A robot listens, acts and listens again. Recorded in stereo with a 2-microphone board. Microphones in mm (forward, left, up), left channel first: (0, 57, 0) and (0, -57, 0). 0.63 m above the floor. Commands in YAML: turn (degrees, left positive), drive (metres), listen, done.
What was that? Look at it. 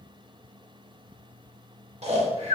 turn: -65
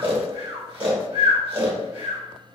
turn: -50
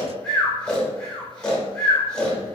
turn: 10
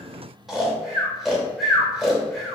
done: "Facing the snoring, under 1 m away."